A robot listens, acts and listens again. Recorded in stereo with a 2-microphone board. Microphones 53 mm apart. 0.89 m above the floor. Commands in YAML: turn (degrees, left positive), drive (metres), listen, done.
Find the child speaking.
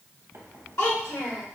turn: 70
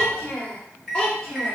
turn: 20
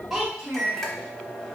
turn: -10
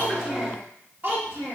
turn: -35
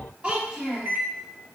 turn: -20
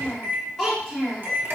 done: "Facing the child speaking, 1 to 2 m away."